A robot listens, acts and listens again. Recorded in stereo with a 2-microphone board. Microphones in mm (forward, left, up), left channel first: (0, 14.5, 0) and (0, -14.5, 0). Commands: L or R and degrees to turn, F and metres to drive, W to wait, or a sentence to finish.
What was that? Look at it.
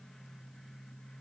W
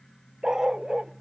R25
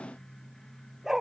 R30
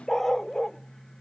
L10
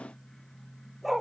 Facing the dog barking.